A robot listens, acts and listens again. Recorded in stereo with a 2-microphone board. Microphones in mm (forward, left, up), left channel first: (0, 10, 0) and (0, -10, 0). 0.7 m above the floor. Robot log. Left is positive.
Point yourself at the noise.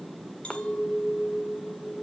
note: The clink: about 65° left or 115° left.
cmd yaw +65
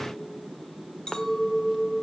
note: So it is at 50° left.
cmd yaw +50
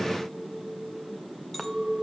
note: The clink is now 15° left.
cmd yaw +15
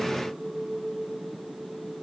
end: Found it: a clink, straight ahead, 1 to 2 m away.